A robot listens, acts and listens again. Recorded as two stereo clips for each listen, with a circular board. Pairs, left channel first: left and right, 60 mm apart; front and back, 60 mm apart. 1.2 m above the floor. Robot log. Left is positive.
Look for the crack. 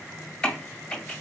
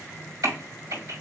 note: The crack: 165° left.
cmd yaw +165
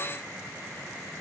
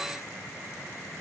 end: I heard a crack from this way, but can't make it out now.